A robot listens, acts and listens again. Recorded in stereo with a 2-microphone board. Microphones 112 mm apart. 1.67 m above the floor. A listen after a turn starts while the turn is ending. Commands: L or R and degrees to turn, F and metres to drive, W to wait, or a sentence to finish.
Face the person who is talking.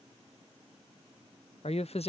L65
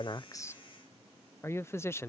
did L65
L25
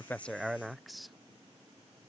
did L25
Found it: a man speaking, straight ahead.